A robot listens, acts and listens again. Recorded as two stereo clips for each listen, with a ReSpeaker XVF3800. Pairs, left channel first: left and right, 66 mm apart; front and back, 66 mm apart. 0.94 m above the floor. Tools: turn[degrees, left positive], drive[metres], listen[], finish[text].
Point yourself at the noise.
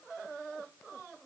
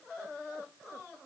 Action: listen[]
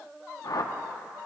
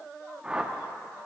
Thought: The whoosh: 105° left.
Action: turn[105]
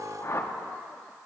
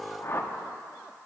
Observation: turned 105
Thought: The whoosh is now 45° left.
Action: turn[45]
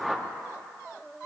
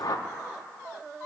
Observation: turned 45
Action: finish[Facing the whoosh, under 1 m away.]